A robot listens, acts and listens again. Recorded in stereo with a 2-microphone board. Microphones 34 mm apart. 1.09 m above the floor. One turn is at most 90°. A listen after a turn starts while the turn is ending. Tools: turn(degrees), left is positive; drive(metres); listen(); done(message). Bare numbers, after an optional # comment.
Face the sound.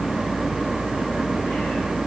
listen()
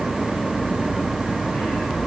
listen()
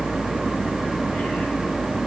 done("I can't make out anything to turn to.")